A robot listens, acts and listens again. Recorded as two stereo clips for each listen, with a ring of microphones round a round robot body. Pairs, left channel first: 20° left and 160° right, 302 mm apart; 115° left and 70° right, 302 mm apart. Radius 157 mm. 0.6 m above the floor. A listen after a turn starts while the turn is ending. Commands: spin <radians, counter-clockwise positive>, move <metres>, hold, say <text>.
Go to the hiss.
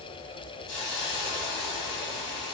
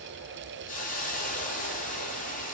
spin 0.87
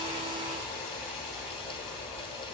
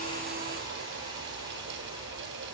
hold
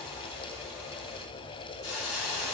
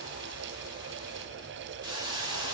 spin 0.17
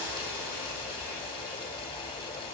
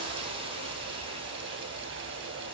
move 1.0
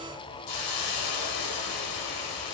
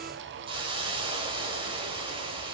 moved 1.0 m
move 1.0
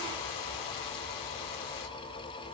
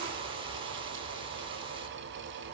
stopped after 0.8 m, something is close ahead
hold
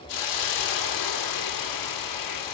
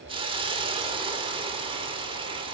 say Arrived at the hiss, straight ahead.